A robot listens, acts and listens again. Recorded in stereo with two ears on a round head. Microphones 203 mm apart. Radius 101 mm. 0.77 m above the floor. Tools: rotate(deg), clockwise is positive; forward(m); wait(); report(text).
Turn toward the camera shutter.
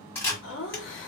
rotate(-30)
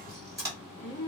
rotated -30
rotate(15)
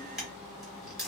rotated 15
report("Found it: a camera shutter, straight ahead.")